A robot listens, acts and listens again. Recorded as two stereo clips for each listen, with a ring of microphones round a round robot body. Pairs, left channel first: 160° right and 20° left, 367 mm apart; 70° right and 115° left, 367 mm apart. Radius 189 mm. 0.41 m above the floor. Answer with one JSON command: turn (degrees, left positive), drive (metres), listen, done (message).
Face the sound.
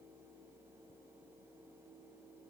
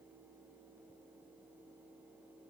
{"listen": true}
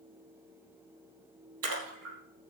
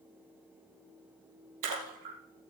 {"turn": 75}
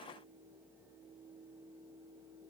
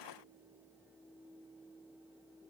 {"done": "I heard a splash from this way, but can't make it out now."}